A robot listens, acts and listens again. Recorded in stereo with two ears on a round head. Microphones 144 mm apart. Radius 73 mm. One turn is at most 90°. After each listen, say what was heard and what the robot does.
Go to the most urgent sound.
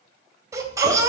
The baby crying: about 20° right or 160° right. Turn 20° right.
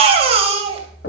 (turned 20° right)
So it is at 140° right. Turn 90° right.
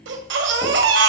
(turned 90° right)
The baby crying is now 75° right. Turn 75° right.
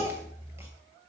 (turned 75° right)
The baby crying is now 15° right. Turn 15° right.
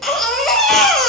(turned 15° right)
Drive 1.0 m forward.
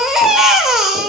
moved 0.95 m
Drive 1.0 m forward.
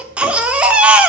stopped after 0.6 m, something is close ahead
The baby crying is now 10° right. Turn 10° right.
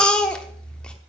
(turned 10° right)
I am next to the baby crying.